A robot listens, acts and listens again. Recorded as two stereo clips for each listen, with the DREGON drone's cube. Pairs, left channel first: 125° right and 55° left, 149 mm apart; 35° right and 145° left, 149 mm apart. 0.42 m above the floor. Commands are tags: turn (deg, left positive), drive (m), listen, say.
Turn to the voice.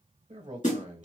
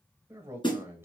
<turn deg="75"/>
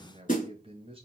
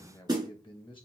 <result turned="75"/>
<turn deg="15"/>
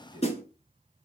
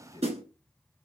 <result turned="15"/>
<say>Facing the man speaking, 1 to 2 m away.</say>